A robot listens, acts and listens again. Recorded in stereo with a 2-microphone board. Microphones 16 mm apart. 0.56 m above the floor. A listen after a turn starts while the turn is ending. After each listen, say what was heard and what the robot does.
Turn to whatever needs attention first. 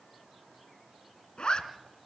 Keep listening.
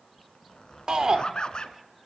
The shout: about 55° right or 125° right. Turn 55° right.
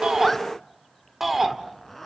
So it is at 20° right. Turn 20° right.
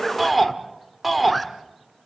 Found it: a shout, straight ahead, 1 to 2 m away.